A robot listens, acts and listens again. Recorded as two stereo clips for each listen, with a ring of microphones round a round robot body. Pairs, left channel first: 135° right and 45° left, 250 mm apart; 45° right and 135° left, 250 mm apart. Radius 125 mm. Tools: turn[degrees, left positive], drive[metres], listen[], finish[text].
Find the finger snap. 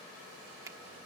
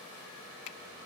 Thought: The finger snap: 35° right.
Action: turn[-35]
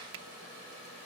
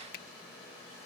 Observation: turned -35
Thought: The finger snap is now 10° left.
Action: turn[10]
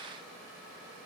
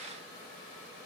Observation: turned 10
Action: listen[]
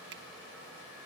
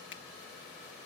Action: listen[]
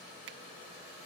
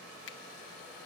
Action: finish[Found it: a finger snap, straight ahead.]